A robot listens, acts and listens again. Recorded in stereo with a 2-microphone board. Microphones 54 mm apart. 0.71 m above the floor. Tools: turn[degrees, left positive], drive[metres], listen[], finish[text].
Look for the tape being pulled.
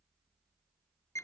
Action: listen[]
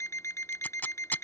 Thought: The tape being pulled: about 30° left or 150° left.
Action: turn[30]
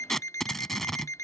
Action: finish[Found it: tape being pulled, straight ahead.]